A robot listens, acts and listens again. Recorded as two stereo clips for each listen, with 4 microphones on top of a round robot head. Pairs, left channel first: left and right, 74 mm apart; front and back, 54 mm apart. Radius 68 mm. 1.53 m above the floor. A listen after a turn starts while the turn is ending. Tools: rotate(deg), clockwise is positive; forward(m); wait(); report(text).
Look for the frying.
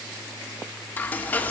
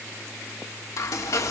rotate(-25)
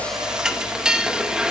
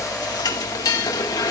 rotate(10)
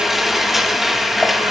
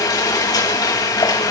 report("Facing the frying.")